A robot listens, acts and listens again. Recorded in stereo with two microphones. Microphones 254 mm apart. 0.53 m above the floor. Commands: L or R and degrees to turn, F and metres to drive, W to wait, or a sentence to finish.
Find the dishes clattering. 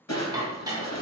R30
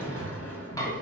L15
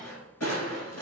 W
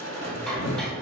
W
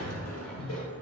Facing where the dishes clattering came from. I can't hear it now.